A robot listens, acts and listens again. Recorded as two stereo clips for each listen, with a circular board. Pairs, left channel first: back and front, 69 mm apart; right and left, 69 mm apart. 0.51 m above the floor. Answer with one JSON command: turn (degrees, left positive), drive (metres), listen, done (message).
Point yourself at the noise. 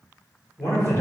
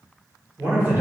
{"turn": 140}
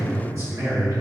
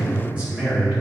{"turn": 20}
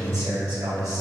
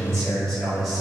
{"done": "Found it: a man speaking, straight ahead."}